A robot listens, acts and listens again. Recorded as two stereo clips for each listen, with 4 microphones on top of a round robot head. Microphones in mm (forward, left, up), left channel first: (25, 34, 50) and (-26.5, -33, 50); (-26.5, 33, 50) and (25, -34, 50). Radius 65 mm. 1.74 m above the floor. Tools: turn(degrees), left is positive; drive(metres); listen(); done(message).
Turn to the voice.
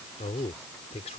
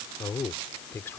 turn(degrees=60)
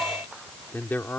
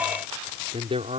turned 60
turn(degrees=-20)
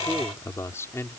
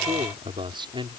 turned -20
turn(degrees=-10)
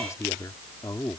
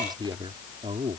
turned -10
turn(degrees=-10)
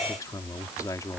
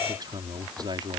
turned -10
done("Facing the man speaking.")